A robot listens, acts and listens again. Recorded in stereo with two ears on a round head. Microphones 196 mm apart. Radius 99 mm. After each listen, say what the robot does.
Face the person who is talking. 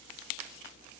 Keep listening.
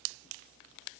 Keep listening.
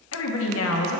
Turn 70° left.
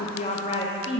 Turn 30° left.
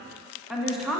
Found it: a woman speaking, straight ahead.